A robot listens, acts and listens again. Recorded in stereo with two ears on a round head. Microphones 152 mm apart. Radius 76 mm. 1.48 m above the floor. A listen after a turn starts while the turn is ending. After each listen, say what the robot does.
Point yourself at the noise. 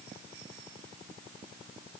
Keep listening.
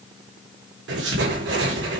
Turn 90° right.
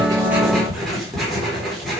Found it: writing, straight ahead, 2 to 4 m away.